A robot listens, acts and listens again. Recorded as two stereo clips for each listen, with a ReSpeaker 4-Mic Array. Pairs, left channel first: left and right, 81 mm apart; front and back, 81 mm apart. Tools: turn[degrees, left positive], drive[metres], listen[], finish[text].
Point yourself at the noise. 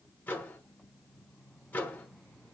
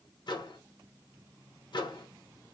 Thought: The microwave: 20° left.
Action: turn[20]
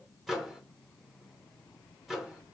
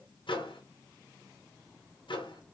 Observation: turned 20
Action: finish[Facing the microwave, 1 to 2 m away.]